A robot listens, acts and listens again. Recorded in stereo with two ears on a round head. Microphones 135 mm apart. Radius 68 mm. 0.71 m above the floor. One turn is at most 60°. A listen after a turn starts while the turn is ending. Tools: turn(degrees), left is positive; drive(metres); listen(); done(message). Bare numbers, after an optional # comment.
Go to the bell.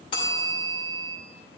# The bell: about 35° left or 145° left.
turn(35)
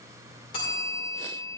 # So it is at 105° left.
turn(60)
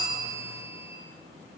# The bell is now 35° left.
turn(35)
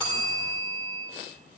# The bell is now 10° left.
turn(10)
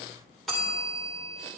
drive(1.0)
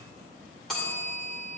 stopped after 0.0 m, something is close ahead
done("Something is in my way. I am facing the bell but have not reached it.")